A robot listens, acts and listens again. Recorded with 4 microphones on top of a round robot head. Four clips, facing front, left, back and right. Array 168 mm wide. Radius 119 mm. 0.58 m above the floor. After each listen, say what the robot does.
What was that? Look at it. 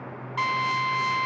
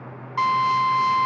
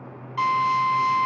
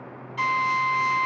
Turn 60° left.
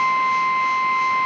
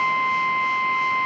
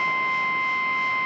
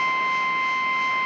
Found it: a drill, straight ahead.